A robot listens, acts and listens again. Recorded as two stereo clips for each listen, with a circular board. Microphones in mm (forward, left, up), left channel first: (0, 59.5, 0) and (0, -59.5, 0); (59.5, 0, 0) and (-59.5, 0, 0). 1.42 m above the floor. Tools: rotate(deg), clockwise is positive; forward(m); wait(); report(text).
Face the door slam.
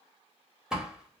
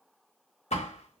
report("Found it: a door slam, straight ahead.")